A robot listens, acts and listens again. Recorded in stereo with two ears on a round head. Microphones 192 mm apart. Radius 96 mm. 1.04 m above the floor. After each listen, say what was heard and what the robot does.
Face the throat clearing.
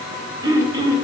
The throat clearing: about 20° right or 160° right. Turn 20° right.
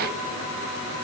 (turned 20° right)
Keep listening.
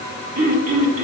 So it is at 140° right. Turn 140° right.
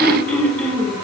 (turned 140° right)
Found it: throat clearing, straight ahead.